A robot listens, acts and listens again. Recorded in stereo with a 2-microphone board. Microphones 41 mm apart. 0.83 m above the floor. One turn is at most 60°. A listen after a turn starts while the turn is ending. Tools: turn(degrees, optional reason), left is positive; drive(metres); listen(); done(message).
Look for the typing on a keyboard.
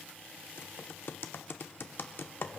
turn(degrees=60, reason="The typing on a keyboard: about 65° left or 115° left.")
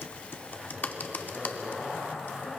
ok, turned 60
turn(degrees=50, reason="So it is at 50° left.")
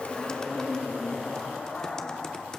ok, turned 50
listen()
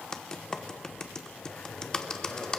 turn(degrees=20, reason="The typing on a keyboard is now 20° left.")
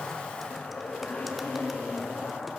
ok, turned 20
listen()
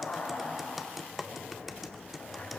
done("Found it: typing on a keyboard, straight ahead, under 1 m away.")